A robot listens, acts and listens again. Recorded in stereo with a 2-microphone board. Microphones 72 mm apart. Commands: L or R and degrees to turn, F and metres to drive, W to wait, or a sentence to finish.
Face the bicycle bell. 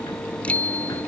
L15
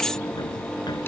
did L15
W
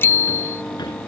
L150
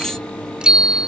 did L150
R10
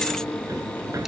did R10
W
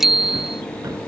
Facing the bicycle bell.